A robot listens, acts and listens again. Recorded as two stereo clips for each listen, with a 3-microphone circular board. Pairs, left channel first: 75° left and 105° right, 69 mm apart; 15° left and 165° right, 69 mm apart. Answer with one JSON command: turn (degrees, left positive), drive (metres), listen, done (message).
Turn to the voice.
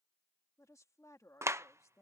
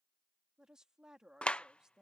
{"turn": 115}
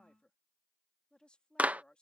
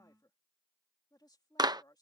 {"done": "Facing the woman speaking."}